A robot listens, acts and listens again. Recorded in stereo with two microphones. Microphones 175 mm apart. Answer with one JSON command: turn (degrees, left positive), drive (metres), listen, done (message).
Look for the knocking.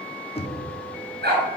{"turn": 35}
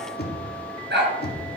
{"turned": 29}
{"turn": 115}
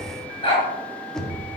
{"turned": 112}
{"done": "Facing the knocking, 1 to 2 m away."}